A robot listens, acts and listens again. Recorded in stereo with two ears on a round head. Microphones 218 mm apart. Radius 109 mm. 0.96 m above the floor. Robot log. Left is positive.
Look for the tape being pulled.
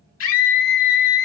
cmd idle
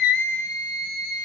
cmd idle
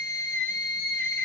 end: I can't make out tape being pulled to turn to.